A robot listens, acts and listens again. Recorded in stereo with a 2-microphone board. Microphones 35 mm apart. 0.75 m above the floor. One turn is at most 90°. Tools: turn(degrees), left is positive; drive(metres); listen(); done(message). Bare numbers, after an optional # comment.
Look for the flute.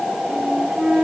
# The flute: about 15° right or 165° right.
turn(-15)
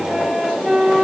done("Facing the flute.")